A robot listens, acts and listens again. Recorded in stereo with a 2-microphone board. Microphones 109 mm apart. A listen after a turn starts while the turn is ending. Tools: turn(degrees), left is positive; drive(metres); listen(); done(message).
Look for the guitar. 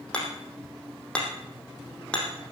listen()
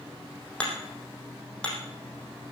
listen()
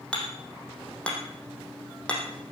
done("I can't make out a guitar to turn to.")